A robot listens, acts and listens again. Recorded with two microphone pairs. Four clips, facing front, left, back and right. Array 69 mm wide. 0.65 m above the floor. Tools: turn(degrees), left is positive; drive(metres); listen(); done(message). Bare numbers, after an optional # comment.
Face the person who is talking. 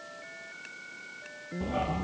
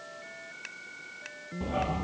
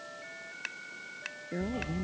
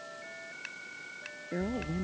# The woman speaking: 120° right.
turn(-120)
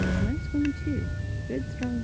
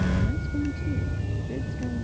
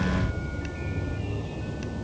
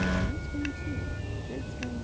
listen()
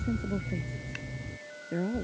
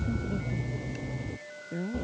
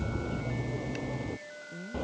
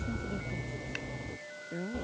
done("Found it: a woman speaking, straight ahead.")